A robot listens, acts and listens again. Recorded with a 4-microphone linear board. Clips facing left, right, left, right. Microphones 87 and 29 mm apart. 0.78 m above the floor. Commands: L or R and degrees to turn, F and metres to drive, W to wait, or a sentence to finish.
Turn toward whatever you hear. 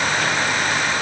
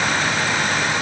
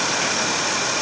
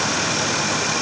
W
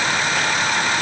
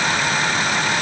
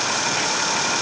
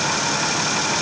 W
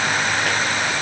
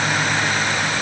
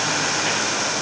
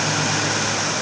I can't make out anything to turn to.